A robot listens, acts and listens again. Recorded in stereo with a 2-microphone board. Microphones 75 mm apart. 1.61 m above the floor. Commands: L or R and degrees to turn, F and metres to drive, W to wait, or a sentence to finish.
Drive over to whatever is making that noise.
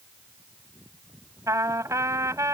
R50
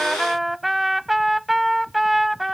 F1.0
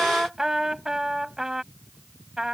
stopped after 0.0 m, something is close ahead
R10
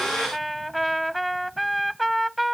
Something is in my way. I am facing the trumpet but have not reached it.